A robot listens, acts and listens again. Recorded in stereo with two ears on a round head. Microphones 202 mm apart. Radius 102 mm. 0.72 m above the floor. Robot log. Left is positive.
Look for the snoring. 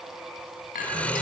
cmd yaw +30
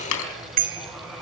note: So it is at 145° left.
cmd yaw +145
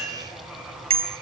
cmd idle
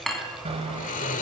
note: The snoring is now 35° left.
cmd yaw +35
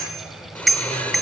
end: Found it: snoring, straight ahead, 1 to 2 m away.